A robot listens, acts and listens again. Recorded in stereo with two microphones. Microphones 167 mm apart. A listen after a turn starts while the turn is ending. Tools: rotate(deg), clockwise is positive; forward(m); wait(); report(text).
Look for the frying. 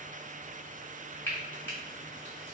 rotate(-30)
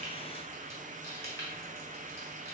wait()
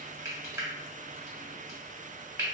rotate(15)
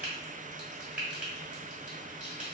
report("Facing the frying.")